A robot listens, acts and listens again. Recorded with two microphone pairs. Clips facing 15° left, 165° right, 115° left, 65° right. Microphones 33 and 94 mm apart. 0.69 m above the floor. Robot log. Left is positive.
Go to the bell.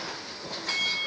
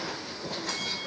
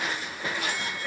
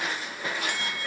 note: The bell: 35° right.
cmd yaw -35
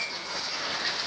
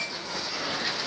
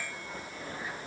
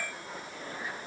cmd idle
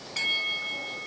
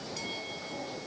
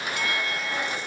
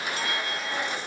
note: The bell is now 10° right.
cmd yaw -10
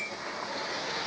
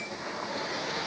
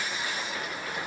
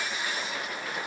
cmd idle
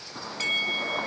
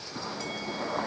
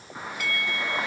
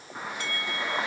cmd fwd 1.0
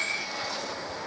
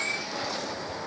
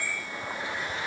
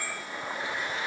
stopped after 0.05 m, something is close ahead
cmd idle
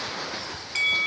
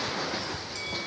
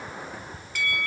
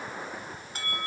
note: The bell is now 10° right.
cmd yaw -10
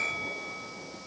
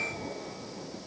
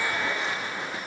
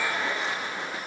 cmd idle
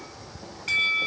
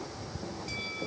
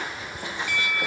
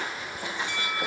end: Something is in my way. I am facing the bell but have not reached it.